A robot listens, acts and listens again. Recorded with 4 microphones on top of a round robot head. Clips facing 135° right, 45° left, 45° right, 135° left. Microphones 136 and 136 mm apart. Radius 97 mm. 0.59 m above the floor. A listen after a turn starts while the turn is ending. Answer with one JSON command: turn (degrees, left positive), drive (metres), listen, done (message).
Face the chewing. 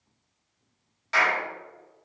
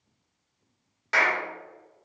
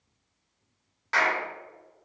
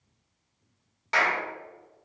{"listen": true}
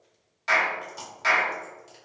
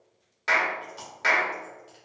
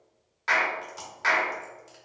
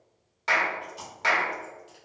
{"turn": -90}
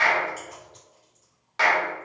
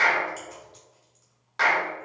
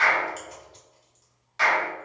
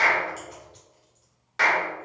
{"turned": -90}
{"listen": true}
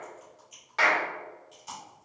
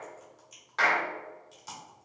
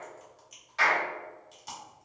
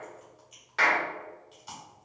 {"done": "Found it: chewing, straight ahead."}